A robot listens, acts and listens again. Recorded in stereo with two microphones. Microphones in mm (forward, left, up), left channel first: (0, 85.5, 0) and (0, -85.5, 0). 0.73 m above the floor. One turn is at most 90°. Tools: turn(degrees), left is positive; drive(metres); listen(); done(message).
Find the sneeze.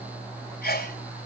turn(degrees=90)
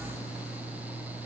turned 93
done("I heard a sneeze from this way, but can't make it out now.")